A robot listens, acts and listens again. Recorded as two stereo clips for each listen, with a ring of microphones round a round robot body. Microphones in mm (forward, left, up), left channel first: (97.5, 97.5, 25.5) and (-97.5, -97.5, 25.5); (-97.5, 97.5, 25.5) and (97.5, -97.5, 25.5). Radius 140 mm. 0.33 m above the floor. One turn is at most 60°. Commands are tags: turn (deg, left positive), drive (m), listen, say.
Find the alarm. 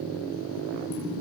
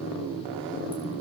<listen/>
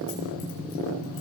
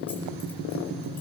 <listen/>
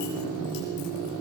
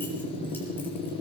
<say>I can't make out an alarm.</say>